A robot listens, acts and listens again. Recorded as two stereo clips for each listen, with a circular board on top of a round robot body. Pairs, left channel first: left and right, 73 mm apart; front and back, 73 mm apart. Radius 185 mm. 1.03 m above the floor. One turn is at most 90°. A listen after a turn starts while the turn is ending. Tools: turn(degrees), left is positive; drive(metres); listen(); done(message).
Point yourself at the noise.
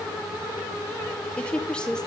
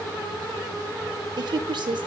turn(degrees=90)
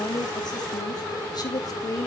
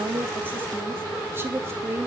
turn(degrees=90)
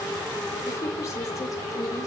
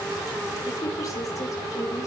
turn(degrees=35)
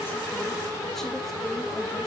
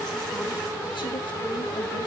listen()
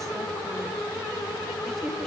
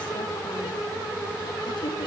done("Facing where the woman speaking came from. I can't hear it now.")